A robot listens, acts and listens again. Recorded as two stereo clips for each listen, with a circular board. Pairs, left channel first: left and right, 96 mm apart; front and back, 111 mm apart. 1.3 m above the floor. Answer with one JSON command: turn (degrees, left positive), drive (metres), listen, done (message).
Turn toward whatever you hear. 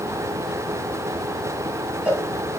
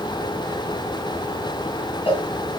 {"turn": -15}
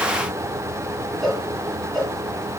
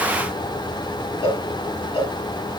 {"done": "Facing the cowbell."}